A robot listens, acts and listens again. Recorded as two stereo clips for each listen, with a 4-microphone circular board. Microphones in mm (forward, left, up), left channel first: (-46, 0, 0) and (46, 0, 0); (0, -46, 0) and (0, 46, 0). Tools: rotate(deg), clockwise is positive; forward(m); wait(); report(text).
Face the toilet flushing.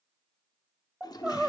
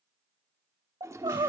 rotate(-145)
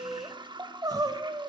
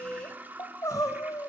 rotate(-20)
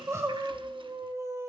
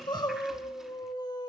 wait()
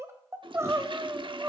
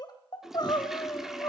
report("Facing the toilet flushing.")